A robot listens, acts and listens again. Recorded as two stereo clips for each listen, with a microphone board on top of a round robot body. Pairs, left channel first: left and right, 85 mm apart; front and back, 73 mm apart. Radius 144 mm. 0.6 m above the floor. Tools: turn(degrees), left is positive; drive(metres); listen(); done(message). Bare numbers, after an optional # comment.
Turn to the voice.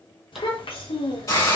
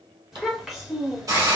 # The child speaking: 95° left.
turn(95)
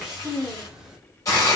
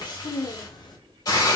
# The child speaking is now 10° right.
turn(-10)
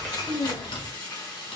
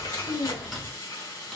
done("Facing the child speaking, 1 to 2 m away.")